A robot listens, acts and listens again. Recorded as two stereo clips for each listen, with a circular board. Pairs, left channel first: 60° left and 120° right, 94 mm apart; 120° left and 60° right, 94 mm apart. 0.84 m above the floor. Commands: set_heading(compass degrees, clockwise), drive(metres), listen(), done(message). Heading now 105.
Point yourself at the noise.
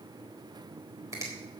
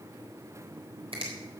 set_heading(165)
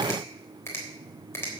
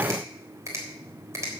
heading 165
done("Found it: a finger snap, straight ahead.")